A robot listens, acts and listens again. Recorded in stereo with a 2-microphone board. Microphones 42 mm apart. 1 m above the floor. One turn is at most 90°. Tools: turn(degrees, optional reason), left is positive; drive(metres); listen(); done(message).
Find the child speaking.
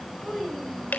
turn(degrees=30)
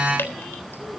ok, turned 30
listen()
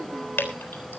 listen()
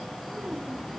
done("I heard a child speaking, but can't make it out now. It was about 15° right or 135° left.")